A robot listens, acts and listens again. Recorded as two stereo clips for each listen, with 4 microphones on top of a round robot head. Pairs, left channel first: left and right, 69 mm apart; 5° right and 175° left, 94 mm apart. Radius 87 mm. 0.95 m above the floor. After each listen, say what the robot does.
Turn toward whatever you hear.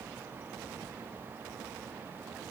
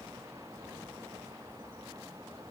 Keep listening.
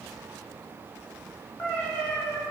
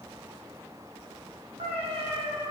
Turn 165° left.
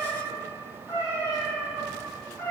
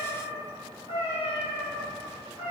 Turn 10° left.
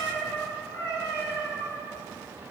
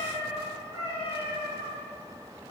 Facing the cat meowing.